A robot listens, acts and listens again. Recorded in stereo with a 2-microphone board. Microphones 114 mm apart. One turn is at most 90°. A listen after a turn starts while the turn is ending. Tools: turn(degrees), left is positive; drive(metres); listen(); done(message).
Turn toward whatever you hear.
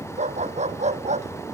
turn(degrees=-90)
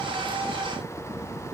listen()
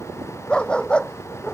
turn(degrees=10)
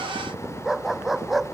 done("Facing the dog barking.")